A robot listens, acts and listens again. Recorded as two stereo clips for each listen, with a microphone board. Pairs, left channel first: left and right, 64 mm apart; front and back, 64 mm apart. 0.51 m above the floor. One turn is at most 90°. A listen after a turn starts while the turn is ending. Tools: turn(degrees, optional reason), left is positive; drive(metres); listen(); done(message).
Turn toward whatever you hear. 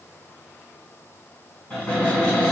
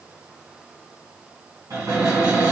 turn(degrees=90, reason="The cupboard door: 160° left.")
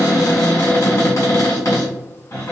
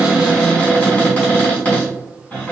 turn(degrees=70, reason="The cupboard door is now 70° left.")
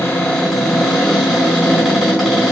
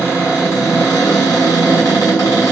done("Facing the cupboard door.")